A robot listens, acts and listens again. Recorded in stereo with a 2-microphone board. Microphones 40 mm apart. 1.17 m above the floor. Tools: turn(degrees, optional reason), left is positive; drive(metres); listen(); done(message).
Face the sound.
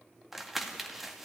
turn(degrees=-30)
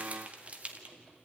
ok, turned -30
turn(degrees=-145, reason="So it is at 145° right.")
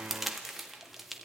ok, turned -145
done("Found it: crumpling, straight ahead, 1 to 2 m away.")